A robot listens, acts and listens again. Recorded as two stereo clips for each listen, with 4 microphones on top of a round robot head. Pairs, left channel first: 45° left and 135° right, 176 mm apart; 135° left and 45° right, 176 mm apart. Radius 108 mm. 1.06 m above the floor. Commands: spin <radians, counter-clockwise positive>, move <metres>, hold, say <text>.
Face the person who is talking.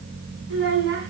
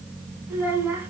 spin -2.18
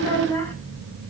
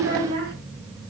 spin -0.52
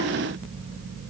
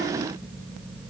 hold
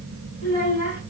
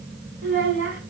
say Facing the child speaking, over 4 m away.